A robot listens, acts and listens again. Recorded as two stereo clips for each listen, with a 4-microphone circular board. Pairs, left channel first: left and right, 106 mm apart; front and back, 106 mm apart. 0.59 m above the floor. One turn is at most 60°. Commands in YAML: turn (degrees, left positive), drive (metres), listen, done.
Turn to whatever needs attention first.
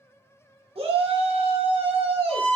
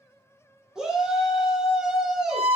turn: -60
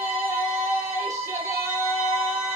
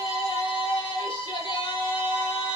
turn: -30
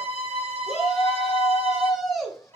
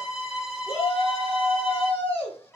done: "Found it: a shout, straight ahead, 1 to 2 m away."